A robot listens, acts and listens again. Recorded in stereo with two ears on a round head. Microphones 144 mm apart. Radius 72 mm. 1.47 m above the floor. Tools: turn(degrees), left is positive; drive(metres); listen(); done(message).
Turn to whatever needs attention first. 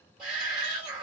turn(degrees=-30)
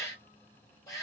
turn(degrees=20)
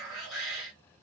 done("Facing the shout.")